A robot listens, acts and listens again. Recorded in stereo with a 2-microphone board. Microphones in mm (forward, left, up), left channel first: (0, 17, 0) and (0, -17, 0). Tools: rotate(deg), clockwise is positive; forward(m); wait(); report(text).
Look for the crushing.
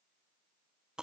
wait()
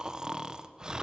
wait()
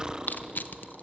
rotate(-60)
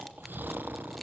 wait()
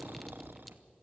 wait()
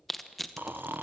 report("Facing the crushing.")